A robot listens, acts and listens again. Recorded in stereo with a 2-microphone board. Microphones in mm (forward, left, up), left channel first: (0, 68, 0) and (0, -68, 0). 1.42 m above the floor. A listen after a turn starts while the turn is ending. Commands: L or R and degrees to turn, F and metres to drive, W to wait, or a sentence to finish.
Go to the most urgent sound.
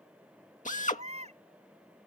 R60
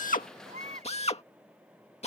R65
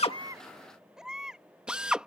F1.0
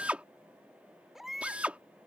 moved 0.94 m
F1.0
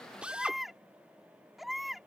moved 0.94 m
F1.0
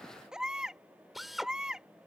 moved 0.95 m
F1.0
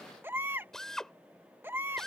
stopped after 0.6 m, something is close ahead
R15
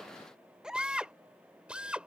I am next to the baby crying.